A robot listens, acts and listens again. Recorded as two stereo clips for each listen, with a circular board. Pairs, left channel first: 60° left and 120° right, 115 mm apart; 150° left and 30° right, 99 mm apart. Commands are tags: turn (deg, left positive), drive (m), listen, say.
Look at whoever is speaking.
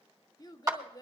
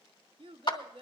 <say>Facing the child speaking.</say>